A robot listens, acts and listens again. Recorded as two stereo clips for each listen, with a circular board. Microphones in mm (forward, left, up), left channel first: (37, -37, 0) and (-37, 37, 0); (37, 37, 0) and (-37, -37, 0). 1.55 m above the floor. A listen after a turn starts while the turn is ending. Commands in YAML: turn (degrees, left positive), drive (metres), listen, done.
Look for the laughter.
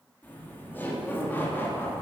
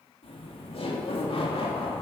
turn: 25
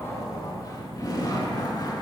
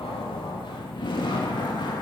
done: "Found it: laughter, straight ahead, 2 to 4 m away."